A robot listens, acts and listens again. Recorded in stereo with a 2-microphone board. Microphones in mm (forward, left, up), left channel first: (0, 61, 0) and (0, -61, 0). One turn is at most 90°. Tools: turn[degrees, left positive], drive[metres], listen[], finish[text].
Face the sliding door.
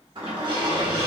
Thought: The sliding door: about 45° right or 135° right.
Action: turn[-45]
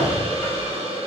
Action: finish[Found it: a sliding door, straight ahead.]